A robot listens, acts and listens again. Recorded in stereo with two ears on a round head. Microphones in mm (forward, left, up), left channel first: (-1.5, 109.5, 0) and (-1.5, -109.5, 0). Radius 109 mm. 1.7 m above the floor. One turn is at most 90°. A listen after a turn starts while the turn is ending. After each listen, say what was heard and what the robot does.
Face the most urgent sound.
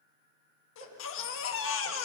The baby crying: about 55° left or 125° left. Turn 55° left.
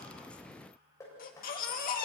So it is at 45° left. Turn 45° left.
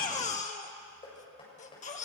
The baby crying is now 35° left. Turn 35° left.
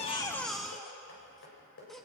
Facing the baby crying.